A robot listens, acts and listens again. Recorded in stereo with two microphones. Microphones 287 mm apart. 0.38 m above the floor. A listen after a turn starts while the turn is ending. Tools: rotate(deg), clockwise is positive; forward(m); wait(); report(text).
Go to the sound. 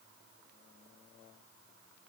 wait()
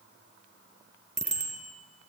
rotate(25)
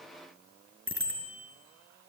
rotate(135)
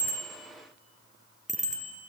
rotate(-25)
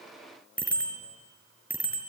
forward(1.0)
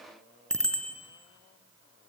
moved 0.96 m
forward(1.0)
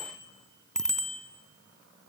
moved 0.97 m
forward(1.0)
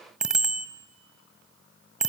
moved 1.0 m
forward(1.0)
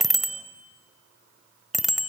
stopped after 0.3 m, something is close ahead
report("Arrived at the bicycle bell, straight ahead.")